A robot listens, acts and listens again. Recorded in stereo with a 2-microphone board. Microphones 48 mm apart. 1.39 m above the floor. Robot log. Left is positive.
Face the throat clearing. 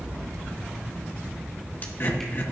note: The throat clearing: about 50° left or 130° left.
cmd yaw +50
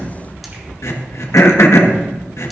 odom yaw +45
note: So it is at 85° left.
cmd yaw +85
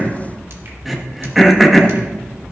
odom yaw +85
end: Facing the throat clearing.